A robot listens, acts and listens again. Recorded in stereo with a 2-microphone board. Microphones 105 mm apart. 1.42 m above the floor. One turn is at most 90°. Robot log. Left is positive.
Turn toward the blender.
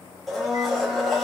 cmd yaw +30
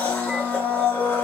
note: So it is at 150° left.
cmd yaw +90
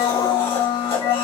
note: The blender is now 65° left.
cmd yaw +65
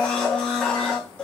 note: The blender is now 10° left.
cmd yaw +10
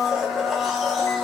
end: Facing the blender.